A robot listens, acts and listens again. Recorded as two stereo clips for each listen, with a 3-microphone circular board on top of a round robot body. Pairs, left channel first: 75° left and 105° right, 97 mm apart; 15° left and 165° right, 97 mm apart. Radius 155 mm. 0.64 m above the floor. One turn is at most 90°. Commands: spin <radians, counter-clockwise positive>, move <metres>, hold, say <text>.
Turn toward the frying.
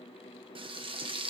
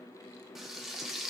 spin -1.31
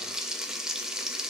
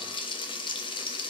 spin -0.35
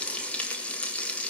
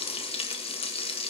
say Found it: frying, straight ahead.